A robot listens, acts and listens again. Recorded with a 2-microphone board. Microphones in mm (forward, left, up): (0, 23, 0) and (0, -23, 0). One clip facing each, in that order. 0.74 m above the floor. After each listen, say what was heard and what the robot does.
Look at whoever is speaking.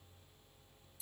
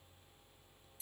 Keep listening.
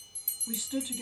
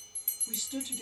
The woman speaking: about 20° left or 160° left. Turn 20° left.
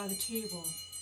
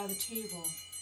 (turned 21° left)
Found it: a woman speaking, straight ahead, under 1 m away.